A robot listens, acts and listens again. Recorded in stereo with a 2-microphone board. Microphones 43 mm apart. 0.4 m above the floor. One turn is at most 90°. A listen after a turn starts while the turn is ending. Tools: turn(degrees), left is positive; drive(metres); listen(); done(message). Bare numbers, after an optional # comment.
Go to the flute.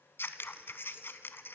listen()
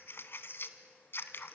listen()
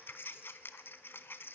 done("I can't make out a flute to turn to.")